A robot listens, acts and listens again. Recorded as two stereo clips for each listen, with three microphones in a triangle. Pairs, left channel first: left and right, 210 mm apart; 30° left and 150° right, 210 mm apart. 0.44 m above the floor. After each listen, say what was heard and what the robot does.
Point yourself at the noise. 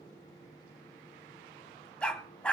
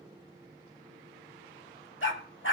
Facing the dog barking, 1 to 2 m away.